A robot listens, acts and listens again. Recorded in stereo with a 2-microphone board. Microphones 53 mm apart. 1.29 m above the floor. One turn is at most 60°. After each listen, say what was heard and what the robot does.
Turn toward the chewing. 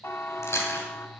The chewing: about 55° left or 125° left. Turn 55° left.
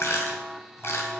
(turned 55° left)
So it is at 60° left. Turn 60° left.
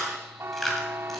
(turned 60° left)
Found it: chewing, straight ahead, 2 to 4 m away.